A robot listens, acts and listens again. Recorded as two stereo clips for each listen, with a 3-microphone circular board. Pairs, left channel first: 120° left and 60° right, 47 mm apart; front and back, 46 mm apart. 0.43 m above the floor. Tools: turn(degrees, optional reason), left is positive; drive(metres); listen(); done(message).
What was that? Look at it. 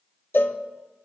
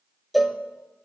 turn(degrees=90, reason="The cowbell: 90° left.")
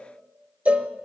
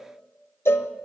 done("Found it: a cowbell, straight ahead.")